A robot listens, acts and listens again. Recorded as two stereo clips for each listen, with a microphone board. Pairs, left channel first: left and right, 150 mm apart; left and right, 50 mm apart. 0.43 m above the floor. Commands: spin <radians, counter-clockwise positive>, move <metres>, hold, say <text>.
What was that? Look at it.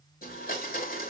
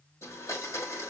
spin 1.13
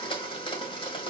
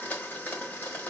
spin 0.61
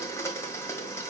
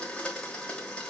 spin 0.35
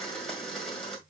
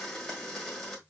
say Facing the blender.